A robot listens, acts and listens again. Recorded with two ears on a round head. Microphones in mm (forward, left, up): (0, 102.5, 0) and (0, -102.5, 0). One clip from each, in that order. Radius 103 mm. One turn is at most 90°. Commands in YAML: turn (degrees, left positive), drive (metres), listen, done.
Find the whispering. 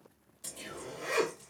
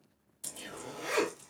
turn: -30
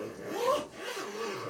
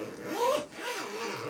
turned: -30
turn: 15
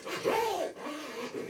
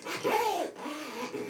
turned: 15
listen: true
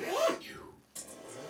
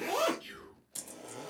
done: "Found it: whispering, straight ahead, 1 to 2 m away."